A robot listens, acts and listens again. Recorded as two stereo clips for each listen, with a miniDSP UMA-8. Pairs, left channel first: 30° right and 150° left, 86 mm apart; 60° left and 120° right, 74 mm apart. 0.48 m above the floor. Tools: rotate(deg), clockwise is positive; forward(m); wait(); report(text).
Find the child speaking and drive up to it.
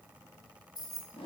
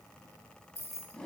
wait()
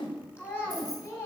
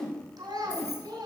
rotate(90)
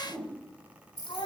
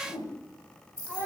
rotate(15)
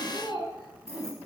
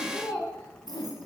forward(1.0)
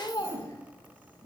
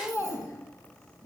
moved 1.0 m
rotate(-10)
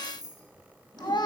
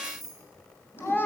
forward(1.0)
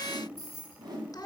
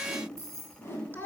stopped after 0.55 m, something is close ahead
report("Arrived at the child speaking, straight ahead.")